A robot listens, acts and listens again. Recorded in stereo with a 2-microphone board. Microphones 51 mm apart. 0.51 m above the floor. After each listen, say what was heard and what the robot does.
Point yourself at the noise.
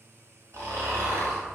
Turn 90° right.
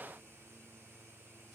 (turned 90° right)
Keep listening.
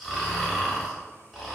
Found it: snoring, straight ahead, 1 to 2 m away.